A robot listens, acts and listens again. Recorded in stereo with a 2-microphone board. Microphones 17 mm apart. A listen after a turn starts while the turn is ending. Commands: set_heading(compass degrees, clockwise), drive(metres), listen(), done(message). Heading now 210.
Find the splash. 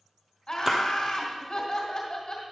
set_heading(235)
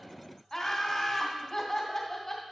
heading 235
listen()
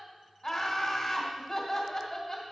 done("I heard a splash, but can't make it out now. It was about straight ahead or 130° right.")